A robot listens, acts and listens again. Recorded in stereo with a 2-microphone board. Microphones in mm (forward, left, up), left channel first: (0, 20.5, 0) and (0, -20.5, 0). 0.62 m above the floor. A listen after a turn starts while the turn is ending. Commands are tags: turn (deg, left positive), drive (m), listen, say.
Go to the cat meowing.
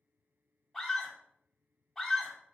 <listen/>
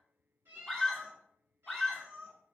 <turn deg="-70"/>
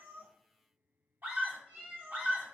<turn deg="-40"/>
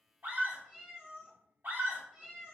<turn deg="-15"/>
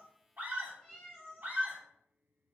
<drive m="1.0"/>
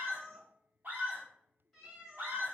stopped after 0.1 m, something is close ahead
<say>Blocked. The cat meowing is further on, straight ahead.</say>